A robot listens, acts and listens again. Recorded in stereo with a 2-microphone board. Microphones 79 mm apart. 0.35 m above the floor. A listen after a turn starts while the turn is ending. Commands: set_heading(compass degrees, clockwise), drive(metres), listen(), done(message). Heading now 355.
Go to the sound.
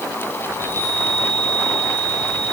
set_heading(35)
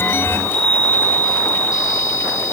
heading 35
set_heading(135)
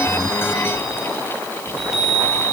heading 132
drive(1.0)
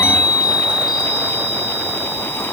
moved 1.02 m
drive(1.0)
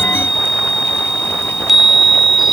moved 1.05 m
drive(1.0)
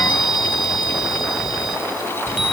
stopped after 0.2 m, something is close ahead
done("I am next to the chime.")